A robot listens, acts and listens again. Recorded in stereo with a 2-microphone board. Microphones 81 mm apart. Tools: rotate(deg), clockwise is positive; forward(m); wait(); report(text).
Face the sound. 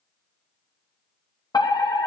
rotate(-55)
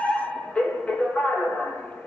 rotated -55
rotate(-15)
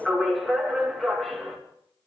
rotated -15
report("Facing the fire alarm, 2 to 4 m away.")